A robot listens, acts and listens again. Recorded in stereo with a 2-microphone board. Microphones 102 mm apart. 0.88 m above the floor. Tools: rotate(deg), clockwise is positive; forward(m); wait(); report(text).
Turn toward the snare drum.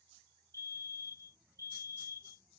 wait()
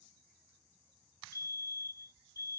wait()
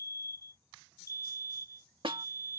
rotate(55)
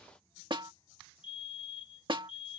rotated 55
rotate(60)
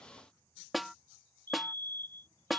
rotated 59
report("Facing the snare drum.")